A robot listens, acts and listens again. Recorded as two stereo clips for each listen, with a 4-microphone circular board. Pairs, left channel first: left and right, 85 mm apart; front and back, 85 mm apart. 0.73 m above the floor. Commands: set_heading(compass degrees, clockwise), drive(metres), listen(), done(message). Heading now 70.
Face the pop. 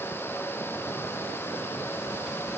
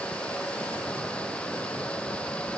listen()
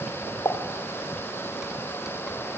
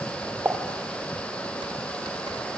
set_heading(310)
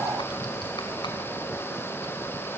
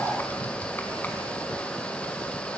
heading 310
done("I heard a pop from this way, but can't make it out now.")